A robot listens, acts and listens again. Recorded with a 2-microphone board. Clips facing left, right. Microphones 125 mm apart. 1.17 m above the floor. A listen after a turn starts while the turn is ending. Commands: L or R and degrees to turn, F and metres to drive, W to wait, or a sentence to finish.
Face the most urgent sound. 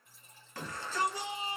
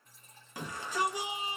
R30
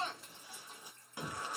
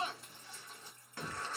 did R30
L15
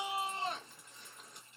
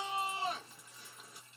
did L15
Facing the shout.